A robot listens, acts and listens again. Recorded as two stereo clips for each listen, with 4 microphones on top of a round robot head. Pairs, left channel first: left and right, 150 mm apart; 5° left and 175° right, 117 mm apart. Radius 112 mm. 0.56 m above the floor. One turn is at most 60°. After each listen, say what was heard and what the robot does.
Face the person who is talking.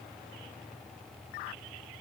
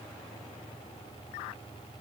Keep listening.
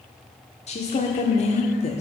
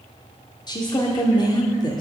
The woman speaking: 55° left. Turn 55° left.
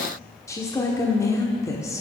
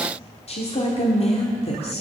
The woman speaking is now 20° left. Turn 20° left.
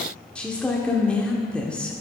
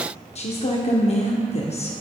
Found it: a woman speaking, straight ahead.